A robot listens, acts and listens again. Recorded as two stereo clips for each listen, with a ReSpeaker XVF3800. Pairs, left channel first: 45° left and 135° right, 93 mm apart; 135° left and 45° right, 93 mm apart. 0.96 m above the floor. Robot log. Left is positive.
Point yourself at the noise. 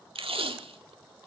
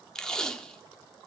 note: The tape being pulled: 145° right.
cmd yaw -145
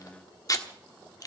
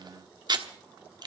end: Facing the tape being pulled, 1 to 2 m away.